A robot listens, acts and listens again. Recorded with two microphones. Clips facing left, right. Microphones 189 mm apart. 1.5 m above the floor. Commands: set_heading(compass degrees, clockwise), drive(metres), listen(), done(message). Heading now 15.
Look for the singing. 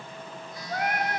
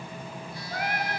set_heading(330)
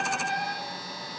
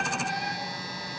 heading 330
set_heading(245)
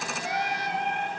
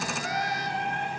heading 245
set_heading(225)
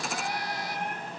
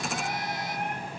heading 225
done("Facing the singing, over 4 m away.")